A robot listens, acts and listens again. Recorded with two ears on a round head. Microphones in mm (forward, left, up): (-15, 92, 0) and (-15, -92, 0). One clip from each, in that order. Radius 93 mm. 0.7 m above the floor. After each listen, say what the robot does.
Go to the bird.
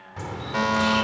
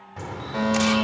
Turn 30° left.
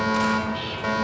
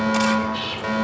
Turn 25° right.
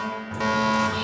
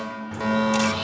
Drive 1.0 m forward.
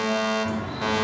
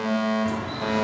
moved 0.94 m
Turn 15° right.
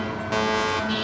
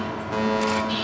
Drive 1.0 m forward.
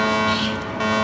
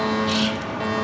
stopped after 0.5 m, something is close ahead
Arrived at the bird, straight ahead.